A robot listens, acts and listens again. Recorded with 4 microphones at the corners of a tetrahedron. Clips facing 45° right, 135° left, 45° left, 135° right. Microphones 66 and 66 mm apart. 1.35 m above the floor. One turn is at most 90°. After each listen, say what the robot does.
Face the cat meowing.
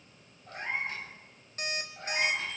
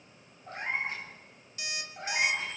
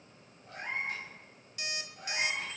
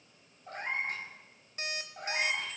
Turn 90° right.
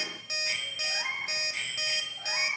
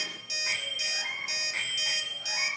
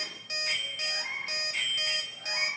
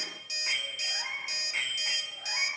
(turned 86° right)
Turn 60° right.
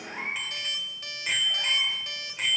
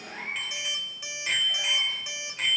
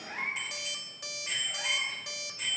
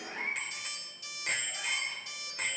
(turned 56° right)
Found it: a cat meowing, straight ahead, over 4 m away.